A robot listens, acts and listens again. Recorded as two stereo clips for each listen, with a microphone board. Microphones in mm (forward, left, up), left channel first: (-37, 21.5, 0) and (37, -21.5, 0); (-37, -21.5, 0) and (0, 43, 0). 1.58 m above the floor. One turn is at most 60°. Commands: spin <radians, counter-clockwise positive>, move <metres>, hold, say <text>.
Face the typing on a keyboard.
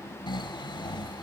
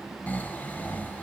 hold
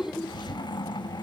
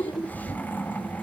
hold
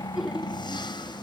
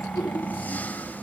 say I can't make out typing on a keyboard to turn to.